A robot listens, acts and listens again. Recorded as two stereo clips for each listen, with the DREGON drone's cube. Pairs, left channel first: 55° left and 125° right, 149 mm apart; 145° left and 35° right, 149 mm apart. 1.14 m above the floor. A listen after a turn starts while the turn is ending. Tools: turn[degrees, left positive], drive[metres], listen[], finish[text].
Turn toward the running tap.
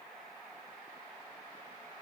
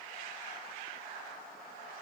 Action: listen[]
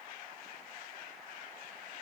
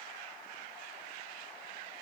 Action: listen[]
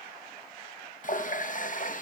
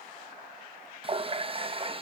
Thought: The running tap: 20° left.
Action: turn[20]
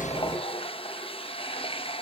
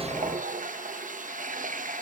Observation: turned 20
Action: finish[Facing the running tap, under 1 m away.]